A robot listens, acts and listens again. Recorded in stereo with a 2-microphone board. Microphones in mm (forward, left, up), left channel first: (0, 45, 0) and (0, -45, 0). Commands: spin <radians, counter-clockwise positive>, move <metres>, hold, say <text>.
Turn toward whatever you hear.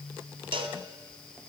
spin -1.22
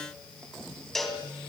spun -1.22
say Found it: a cowbell, straight ahead, 1 to 2 m away.